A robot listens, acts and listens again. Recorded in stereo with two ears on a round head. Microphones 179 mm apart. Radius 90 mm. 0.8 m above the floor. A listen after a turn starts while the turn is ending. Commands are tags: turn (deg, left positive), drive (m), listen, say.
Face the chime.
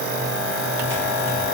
<listen/>
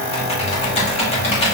<listen/>
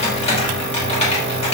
<say>I can't make out a chime to turn to.</say>